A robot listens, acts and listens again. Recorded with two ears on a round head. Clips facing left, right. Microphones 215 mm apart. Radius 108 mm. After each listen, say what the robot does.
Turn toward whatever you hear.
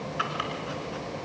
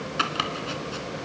Turn 55° right.
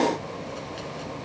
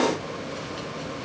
Keep listening.
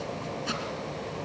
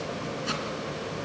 Facing the chopping.